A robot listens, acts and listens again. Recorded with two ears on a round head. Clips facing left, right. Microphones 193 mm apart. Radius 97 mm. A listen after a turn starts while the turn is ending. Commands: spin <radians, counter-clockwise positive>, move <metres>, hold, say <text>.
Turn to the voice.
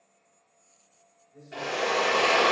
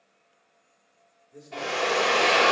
spin -1.31
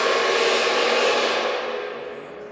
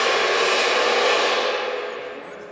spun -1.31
hold
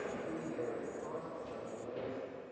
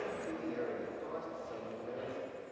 spin -0.44
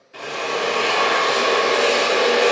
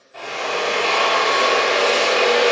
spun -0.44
hold
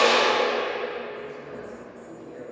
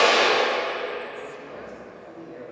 say Found it: a man speaking, straight ahead.